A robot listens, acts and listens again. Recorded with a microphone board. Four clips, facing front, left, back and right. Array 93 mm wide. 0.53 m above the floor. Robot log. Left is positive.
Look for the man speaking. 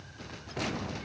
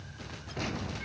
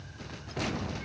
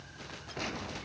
cmd idle
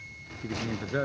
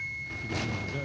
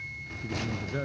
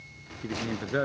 note: The man speaking: 60° right.
cmd yaw -60
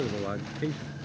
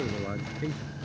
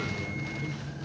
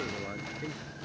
cmd idle
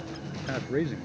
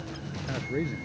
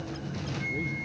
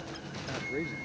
end: Found it: a man speaking, straight ahead.